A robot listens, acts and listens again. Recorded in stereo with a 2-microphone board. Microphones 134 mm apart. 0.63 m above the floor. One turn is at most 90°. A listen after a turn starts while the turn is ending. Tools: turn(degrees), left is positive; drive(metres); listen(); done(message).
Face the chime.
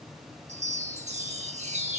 turn(degrees=-55)
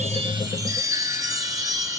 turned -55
turn(degrees=-30)
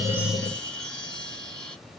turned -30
turn(degrees=10)
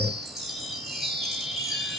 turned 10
done("Found it: a chime, straight ahead.")